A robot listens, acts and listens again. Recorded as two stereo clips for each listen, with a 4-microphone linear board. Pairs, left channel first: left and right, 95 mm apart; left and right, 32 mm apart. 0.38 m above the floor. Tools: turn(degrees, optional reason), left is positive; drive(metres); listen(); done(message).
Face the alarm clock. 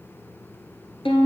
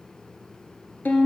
listen()
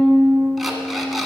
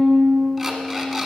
turn(degrees=30)
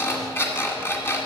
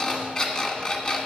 turn(degrees=155, reason="So it is at 155° left.")
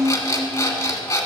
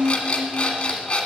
turn(degrees=35, reason="The alarm clock is now 35° left.")
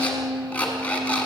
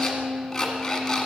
turn(degrees=15, reason="The alarm clock is now 15° left.")
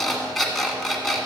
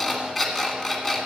done("Facing the alarm clock.")